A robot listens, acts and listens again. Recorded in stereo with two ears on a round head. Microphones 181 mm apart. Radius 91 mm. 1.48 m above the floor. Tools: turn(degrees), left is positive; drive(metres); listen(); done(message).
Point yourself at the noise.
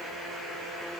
listen()
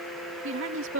turn(degrees=-70)
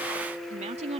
turn(degrees=-30)
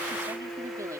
listen()
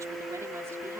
listen()
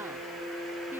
done("I heard a woman speaking from this way, but can't make it out now.")